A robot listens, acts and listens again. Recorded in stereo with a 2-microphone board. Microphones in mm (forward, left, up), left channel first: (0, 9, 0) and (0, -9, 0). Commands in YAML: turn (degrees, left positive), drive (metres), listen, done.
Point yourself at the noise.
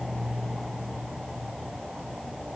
listen: true
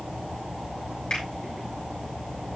listen: true
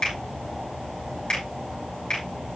turn: 50
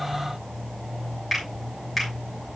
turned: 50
done: "Facing the finger snap, 2 to 4 m away."